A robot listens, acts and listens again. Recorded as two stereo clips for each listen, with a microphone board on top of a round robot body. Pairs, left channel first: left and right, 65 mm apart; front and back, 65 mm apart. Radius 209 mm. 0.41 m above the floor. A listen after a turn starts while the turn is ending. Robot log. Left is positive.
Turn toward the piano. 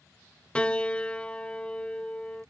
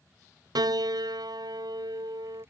note: The piano: 165° left.
cmd yaw +165
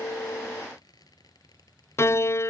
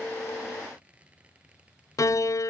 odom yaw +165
note: The piano is now 40° left.
cmd yaw +40
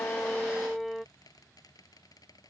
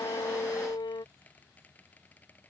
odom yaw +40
end: Facing the piano.